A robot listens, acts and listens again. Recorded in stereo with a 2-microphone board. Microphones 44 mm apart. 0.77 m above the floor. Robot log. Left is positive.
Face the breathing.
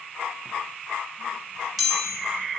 cmd idle
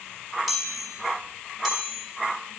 cmd idle
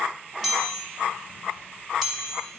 end: I can't make out breathing, only a chime.